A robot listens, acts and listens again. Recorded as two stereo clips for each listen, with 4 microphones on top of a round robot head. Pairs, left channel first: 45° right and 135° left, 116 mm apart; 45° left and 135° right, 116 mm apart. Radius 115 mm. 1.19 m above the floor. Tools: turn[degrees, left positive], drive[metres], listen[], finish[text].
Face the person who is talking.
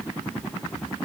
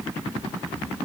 Action: listen[]
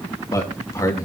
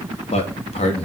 Thought: The man speaking: 15° left.
Action: turn[15]
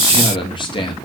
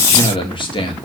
Action: finish[Found it: a man speaking, straight ahead.]